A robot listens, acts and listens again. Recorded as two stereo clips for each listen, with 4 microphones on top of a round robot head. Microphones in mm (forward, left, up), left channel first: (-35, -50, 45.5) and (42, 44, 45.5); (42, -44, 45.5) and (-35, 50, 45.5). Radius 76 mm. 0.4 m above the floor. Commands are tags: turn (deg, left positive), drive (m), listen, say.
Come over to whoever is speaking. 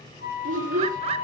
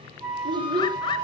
<turn deg="75"/>
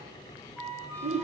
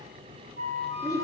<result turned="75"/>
<turn deg="15"/>
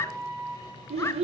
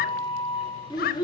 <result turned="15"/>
<turn deg="10"/>
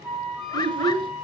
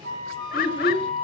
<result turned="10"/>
<drive m="1.0"/>
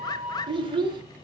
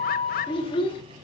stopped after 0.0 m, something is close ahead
<say>Something is in my way. I am facing the child speaking but have not reached it.</say>